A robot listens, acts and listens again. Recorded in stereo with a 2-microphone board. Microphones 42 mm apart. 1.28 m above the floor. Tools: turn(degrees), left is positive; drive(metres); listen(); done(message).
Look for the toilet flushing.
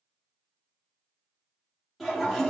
turn(degrees=30)
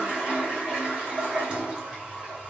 turn(degrees=-25)
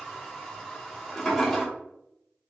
turn(degrees=10)
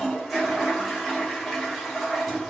done("Facing the toilet flushing, under 1 m away.")